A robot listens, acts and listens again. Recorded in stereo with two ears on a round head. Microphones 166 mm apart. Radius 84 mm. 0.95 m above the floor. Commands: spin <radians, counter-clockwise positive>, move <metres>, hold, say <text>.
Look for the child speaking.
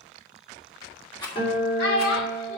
spin 1.22
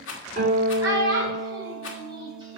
spin -0.35
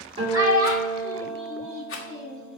spin -0.35
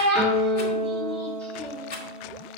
say Facing the child speaking.